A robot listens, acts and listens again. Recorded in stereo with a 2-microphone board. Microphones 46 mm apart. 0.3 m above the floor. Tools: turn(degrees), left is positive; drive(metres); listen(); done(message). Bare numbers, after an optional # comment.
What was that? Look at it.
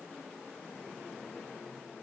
listen()
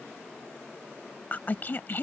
# The woman speaking: about 45° left or 135° left.
turn(45)
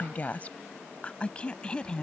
# So it is at 20° left.
turn(20)
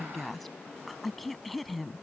done("Facing the woman speaking.")